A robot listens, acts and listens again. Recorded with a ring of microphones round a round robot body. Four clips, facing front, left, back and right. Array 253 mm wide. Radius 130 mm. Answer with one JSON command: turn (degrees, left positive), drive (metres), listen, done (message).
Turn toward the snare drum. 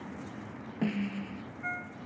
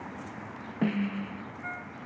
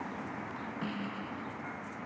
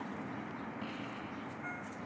{"turn": 75}
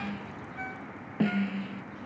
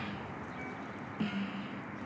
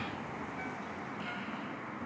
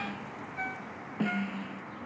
{"turn": -20}
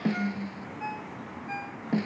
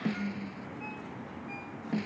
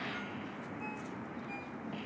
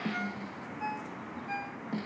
{"done": "Facing the snare drum."}